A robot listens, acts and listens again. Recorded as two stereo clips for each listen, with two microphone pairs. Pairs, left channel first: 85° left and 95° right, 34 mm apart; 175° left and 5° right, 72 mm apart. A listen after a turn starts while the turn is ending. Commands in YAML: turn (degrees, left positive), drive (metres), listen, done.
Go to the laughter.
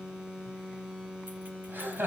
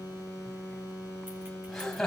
turn: -100
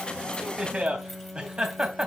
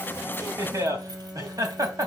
turn: -35
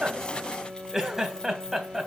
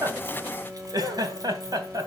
turn: -15
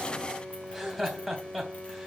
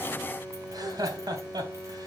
drive: 1.0
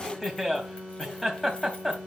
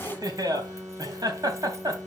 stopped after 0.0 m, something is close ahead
done: "Blocked. The laughter is further on, straight ahead."